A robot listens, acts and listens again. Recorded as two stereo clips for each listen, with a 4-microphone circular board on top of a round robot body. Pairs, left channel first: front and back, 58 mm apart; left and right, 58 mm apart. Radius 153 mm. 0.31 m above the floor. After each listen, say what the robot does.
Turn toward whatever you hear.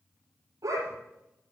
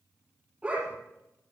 Turn 160° right.
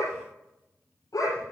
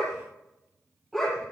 Found it: a dog barking, straight ahead.